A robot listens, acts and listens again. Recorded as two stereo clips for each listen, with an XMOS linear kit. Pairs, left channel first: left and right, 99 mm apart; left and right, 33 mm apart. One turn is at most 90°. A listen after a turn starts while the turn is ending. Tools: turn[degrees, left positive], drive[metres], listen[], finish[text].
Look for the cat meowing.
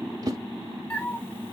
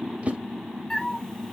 Thought: The cat meowing: about 20° left or 160° left.
Action: turn[20]
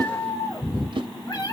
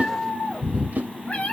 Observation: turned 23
Thought: So it is at 135° left.
Action: turn[90]
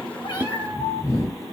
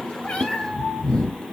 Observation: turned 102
Thought: The cat meowing is now 35° left.
Action: turn[35]
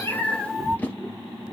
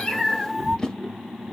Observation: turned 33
Action: finish[Found it: a cat meowing, straight ahead, 2 to 4 m away.]